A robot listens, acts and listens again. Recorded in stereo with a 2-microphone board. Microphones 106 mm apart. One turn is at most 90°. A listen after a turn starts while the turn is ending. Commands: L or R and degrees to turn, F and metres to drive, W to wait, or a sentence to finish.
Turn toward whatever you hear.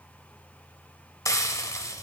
L30
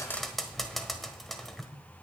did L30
Found it: frying, straight ahead, 1 to 2 m away.